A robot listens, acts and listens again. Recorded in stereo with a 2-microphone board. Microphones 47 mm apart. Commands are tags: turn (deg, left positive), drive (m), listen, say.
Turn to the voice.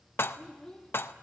<turn deg="15"/>
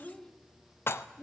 <turn deg="20"/>
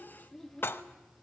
<turn deg="30"/>
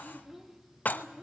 <say>Facing the child speaking.</say>